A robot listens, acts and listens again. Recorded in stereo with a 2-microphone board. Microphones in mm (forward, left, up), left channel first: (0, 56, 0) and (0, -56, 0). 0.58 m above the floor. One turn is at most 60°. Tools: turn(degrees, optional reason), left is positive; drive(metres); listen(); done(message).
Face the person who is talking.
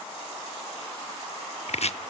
listen()
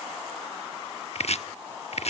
listen()
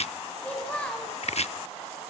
turn(degrees=30)
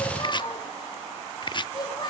turn(degrees=60, reason="So it is at 140° left.")
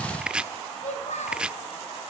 turn(degrees=60, reason="The child speaking is now 85° left.")
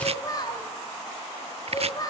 turn(degrees=30, reason="The child speaking is now 30° left.")
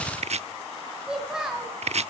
done("Facing the child speaking, 2 to 4 m away.")